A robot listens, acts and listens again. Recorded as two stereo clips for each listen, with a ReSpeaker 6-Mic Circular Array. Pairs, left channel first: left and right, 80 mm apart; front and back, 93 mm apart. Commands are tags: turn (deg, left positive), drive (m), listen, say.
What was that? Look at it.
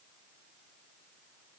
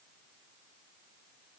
<listen/>
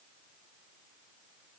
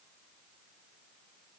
<listen/>
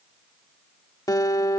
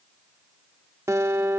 <turn deg="125"/>
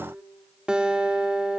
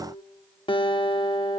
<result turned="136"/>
<turn deg="-10"/>
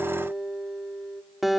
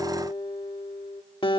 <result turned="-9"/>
<say>Facing the guitar, 1 to 2 m away.</say>